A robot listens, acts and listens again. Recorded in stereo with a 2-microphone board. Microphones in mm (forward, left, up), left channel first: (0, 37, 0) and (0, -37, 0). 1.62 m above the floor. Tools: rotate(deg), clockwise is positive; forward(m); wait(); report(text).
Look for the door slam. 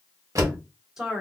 rotate(45)
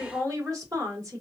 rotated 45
wait()
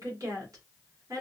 report("I heard a door slam, but can't make it out now. It was about straight ahead or 90° right.")